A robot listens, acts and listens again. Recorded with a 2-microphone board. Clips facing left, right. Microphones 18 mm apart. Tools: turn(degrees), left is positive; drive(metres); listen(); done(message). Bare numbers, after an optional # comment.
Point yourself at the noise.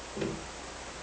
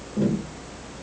# The tapping: about 40° left or 140° left.
turn(40)
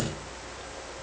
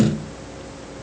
done("Found it: tapping, straight ahead.")